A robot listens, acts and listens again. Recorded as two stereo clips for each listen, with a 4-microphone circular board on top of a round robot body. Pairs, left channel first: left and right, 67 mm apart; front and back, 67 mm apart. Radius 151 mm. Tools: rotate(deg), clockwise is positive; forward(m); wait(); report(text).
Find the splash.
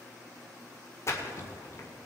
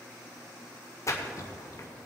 rotate(-45)
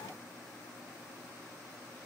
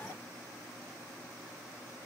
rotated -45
report("Facing where the splash came from. I can't hear it now.")